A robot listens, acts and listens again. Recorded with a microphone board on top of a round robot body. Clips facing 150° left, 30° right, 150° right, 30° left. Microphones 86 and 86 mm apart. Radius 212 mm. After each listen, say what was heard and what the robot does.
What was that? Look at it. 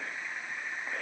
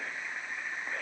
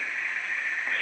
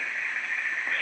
Keep listening.
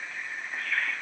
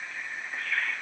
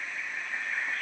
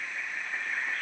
Keep listening.
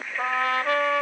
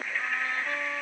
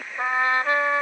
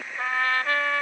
The trumpet: 140° left. Turn 140° left.
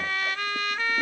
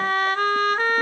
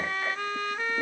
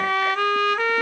The trumpet is now 20° left. Turn 20° left.
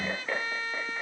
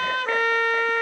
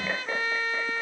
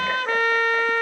Found it: a trumpet, straight ahead.